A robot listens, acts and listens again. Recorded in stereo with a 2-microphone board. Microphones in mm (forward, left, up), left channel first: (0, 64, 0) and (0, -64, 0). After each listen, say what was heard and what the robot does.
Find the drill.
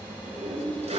Keep listening.
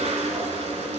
Keep listening.
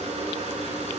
I can't make out a drill to turn to.